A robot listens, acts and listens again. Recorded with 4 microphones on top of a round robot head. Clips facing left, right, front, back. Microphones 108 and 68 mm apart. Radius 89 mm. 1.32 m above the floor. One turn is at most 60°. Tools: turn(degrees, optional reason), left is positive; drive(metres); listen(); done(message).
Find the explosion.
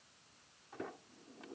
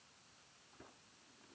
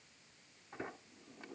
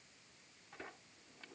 listen()
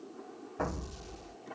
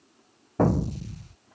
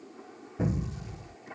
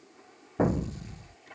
turn(degrees=-60, reason="The explosion: 130° right.")
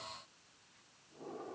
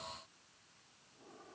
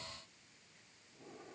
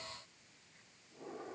turn(degrees=-60, reason="Nothing new. It was at 70° right.")
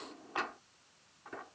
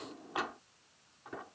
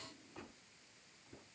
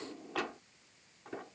turn(degrees=-10, reason="Nothing new. It was at 10° right.")
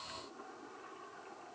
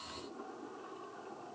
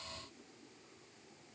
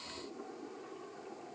done("I heard an explosion from this way, but can't make it out now.")